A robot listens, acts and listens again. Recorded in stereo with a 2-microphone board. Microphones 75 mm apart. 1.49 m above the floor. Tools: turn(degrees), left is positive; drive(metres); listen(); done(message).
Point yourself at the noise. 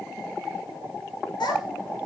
turn(degrees=90)
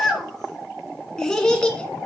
turn(degrees=10)
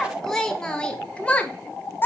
turn(degrees=30)
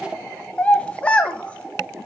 turn(degrees=15)
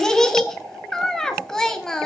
done("Found it: a child speaking, straight ahead, 1 to 2 m away.")